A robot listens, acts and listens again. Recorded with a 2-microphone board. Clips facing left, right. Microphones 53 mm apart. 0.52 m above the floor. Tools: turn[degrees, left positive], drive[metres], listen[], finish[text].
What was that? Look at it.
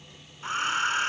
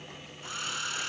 Thought: The hair dryer: about 40° left or 140° left.
Action: turn[40]
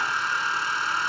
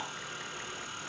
Thought: So it is at 100° left.
Action: turn[100]
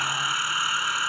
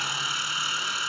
Thought: The hair dryer is now 20° left.
Action: turn[20]
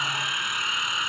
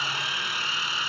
Thought: The hair dryer is now 10° left.
Action: turn[10]
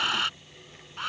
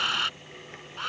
Action: finish[Found it: a hair dryer, straight ahead.]